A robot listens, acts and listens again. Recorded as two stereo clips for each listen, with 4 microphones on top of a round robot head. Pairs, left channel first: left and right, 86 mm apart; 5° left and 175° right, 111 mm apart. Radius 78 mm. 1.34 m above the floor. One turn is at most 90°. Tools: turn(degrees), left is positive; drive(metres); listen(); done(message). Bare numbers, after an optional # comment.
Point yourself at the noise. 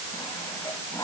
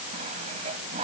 # The sawing: 160° left.
turn(90)
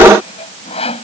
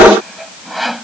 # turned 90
# The sawing is now 95° left.
turn(90)
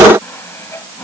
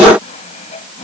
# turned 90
# The sawing is now 30° left.
turn(30)
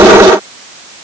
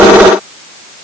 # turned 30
listen()
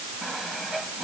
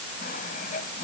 done("Facing the sawing.")